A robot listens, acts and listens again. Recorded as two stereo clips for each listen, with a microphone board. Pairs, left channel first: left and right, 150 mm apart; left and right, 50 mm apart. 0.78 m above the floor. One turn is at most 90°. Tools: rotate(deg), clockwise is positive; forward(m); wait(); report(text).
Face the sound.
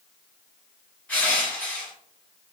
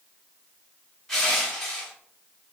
rotate(-30)
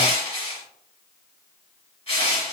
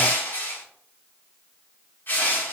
rotate(-90)
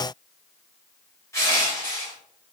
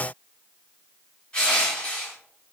rotate(-20)
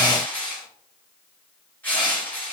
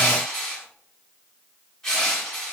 rotate(-10)
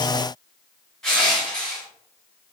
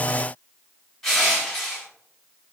report("Facing the crushing.")